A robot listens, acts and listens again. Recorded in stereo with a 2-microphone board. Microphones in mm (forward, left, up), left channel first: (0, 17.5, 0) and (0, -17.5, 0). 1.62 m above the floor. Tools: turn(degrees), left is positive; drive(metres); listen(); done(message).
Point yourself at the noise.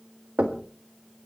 turn(degrees=-60)
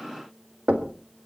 turn(degrees=-50)
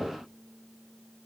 listen()
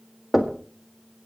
done("Facing the knocking, 1 to 2 m away.")